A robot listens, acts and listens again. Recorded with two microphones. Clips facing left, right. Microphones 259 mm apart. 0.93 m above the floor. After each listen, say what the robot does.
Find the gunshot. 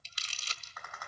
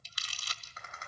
Keep listening.
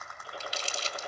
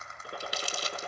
Turn 60° right.
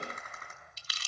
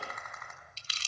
Keep listening.
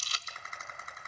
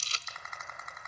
I heard a gunshot, but can't make it out now. It was about straight ahead or 60° right.